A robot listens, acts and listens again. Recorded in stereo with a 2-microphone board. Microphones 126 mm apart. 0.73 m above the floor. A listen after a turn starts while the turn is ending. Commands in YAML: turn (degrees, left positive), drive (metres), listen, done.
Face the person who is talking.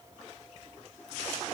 listen: true
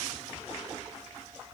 listen: true
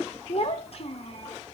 turn: 50
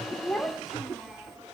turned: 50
done: "Facing the child speaking."